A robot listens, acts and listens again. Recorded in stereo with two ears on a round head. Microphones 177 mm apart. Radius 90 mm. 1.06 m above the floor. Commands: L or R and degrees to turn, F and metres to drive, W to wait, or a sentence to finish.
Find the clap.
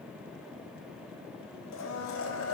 W
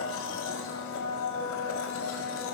W
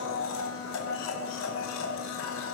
I can't make out a clap, only a blender.